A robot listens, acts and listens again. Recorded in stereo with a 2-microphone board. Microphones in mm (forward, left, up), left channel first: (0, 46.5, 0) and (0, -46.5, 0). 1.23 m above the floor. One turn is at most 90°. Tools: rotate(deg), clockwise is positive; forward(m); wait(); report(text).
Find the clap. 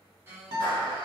rotate(-50)
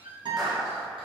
report("Found it: a clap, straight ahead, under 1 m away.")